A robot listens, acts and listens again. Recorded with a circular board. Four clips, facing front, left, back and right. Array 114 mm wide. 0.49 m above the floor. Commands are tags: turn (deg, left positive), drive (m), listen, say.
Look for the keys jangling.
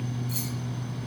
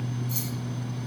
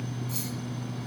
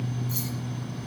<turn deg="-25"/>
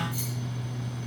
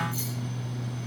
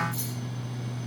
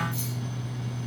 <turn deg="25"/>
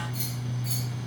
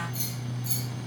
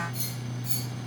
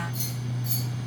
<turn deg="-10"/>
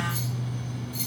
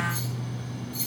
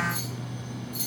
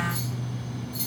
<say>Facing the keys jangling, over 4 m away.</say>